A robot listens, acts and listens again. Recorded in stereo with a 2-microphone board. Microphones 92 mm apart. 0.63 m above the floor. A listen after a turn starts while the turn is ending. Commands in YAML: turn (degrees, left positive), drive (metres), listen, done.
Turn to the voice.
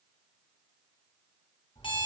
listen: true
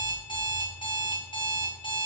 listen: true
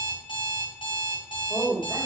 turn: -45
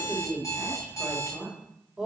turn: -10
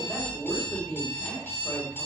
done: "Facing the woman speaking, 2 to 4 m away."